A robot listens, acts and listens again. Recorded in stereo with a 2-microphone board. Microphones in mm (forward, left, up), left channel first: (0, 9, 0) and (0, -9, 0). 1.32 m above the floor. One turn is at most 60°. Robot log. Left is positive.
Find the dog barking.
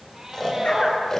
note: The dog barking: about 70° left or 110° left.
cmd yaw +60
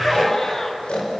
cmd idle
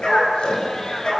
note: So it is at 50° left.
cmd yaw +50
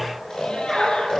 end: Found it: a dog barking, straight ahead.